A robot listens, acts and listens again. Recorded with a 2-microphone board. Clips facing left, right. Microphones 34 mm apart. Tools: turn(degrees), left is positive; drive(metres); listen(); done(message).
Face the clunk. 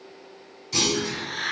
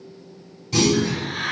turn(degrees=-30)
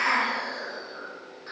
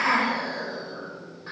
listen()
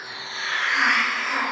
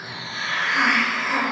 done("I heard a clunk, but can't make it out now. It was about 20° left or 140° right.")